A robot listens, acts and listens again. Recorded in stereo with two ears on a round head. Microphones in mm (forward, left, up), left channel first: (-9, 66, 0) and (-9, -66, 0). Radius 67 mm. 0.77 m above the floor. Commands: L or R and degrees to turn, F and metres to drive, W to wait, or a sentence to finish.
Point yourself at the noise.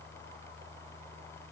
W
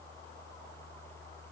W
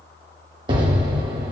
R35
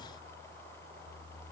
W
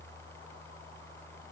I heard an explosion, but can't make it out now. It was about straight ahead or 110° right.